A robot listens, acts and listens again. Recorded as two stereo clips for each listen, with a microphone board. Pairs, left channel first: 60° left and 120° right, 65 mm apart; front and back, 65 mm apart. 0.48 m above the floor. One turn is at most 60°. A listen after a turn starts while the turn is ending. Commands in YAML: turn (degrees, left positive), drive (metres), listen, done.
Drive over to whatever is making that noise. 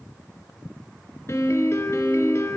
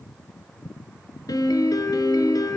turn: 15
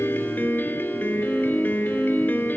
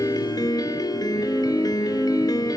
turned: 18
drive: 1.0
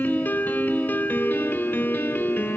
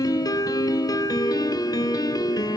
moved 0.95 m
drive: 1.0
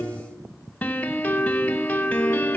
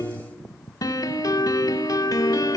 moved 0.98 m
drive: 1.0
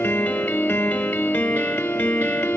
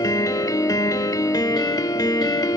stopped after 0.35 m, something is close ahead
done: "Arrived at the piano, straight ahead."